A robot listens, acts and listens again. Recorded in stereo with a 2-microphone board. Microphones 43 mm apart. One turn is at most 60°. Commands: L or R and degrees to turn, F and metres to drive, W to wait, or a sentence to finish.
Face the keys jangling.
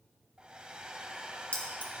L35
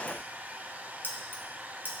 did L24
L60
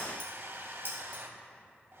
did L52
L60
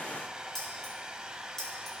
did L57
L10
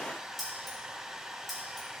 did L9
W
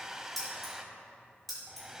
Facing the keys jangling, over 4 m away.